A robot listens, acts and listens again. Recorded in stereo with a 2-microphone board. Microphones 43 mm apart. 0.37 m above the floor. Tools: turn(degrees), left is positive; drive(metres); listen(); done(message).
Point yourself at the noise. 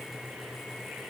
listen()
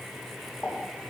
turn(degrees=35)
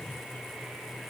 listen()
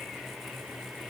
done("I heard a pop, but can't make it out now. It was about straight ahead or 110° left.")